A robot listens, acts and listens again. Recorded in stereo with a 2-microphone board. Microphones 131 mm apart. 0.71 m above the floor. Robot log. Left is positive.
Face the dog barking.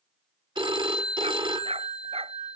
note: The dog barking: about 45° right or 135° right.
cmd yaw -45
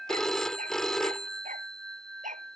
note: So it is at 80° right.
cmd yaw -80
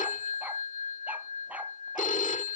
cmd idle
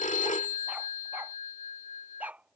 note: The dog barking is now 10° right.
cmd yaw -10
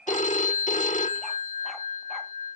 cmd idle
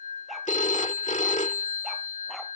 cmd idle
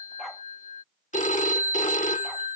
end: Facing where the dog barking came from. I can't hear it now.